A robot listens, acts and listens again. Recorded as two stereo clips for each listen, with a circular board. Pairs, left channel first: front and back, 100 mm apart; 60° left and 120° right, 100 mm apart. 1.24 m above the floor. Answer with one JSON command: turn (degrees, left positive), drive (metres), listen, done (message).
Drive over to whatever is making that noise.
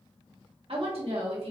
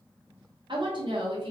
{"turn": -160}
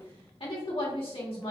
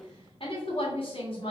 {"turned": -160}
{"turn": 30}
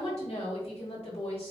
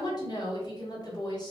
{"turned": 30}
{"turn": 10}
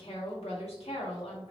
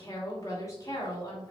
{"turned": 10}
{"drive": 1.0}
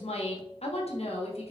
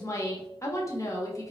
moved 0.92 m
{"drive": 1.0}
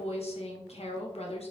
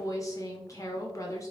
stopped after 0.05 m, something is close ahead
{"done": "Arrived at the woman speaking, straight ahead."}